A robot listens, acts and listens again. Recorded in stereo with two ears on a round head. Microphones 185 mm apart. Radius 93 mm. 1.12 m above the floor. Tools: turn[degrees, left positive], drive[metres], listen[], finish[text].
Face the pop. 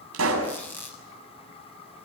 Action: turn[-90]
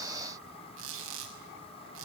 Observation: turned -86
Action: finish[I heard a pop from this way, but can't make it out now.]